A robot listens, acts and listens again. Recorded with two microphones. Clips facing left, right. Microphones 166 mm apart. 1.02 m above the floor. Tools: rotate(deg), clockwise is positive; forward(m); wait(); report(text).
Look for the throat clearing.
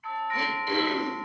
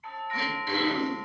rotate(-15)
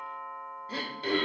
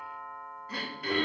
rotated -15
rotate(-155)
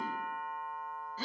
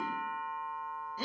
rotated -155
rotate(15)
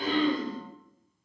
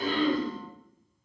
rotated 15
report("Facing the throat clearing, under 1 m away.")